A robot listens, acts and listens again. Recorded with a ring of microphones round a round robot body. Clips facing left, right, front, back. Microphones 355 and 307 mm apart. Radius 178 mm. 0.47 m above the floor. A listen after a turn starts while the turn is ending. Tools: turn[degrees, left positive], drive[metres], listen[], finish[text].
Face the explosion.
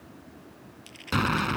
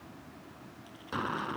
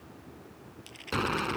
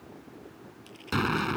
Thought: The explosion: 125° left.
Action: turn[125]
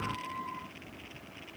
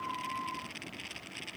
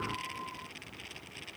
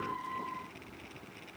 Action: finish[Facing where the explosion came from. I can't hear it now.]